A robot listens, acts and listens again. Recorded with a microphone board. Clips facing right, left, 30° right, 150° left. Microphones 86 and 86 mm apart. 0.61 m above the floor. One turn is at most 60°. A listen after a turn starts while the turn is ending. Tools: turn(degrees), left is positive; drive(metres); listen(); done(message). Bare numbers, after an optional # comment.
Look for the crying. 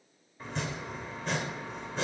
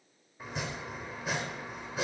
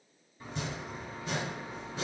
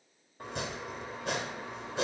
listen()
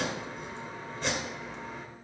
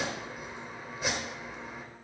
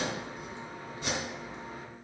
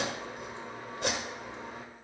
listen()
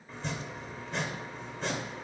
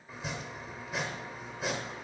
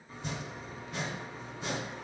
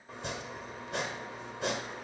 done("I can't make out crying to turn to.")